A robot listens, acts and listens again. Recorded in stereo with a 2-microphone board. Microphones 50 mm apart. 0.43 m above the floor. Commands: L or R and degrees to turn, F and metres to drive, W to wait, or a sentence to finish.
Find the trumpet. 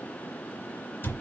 W
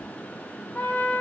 L30
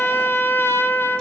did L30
L115
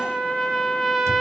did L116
Found it: a trumpet, straight ahead.